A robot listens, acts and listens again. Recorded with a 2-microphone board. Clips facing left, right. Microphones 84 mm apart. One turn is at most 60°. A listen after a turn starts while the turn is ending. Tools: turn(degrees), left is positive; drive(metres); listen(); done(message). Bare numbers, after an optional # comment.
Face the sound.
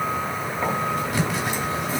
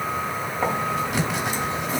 # The writing: about 20° right or 160° right.
turn(-20)
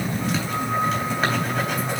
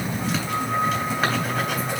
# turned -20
done("Facing the writing, 2 to 4 m away.")